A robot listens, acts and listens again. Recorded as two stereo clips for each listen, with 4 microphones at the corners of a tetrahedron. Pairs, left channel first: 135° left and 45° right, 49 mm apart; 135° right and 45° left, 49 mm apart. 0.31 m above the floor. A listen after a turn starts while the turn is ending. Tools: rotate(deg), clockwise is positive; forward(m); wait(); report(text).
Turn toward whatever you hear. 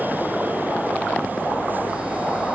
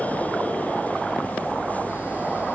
wait()
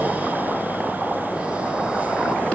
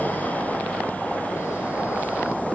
wait()
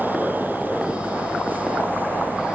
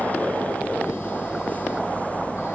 report("I can't make out anything to turn to.")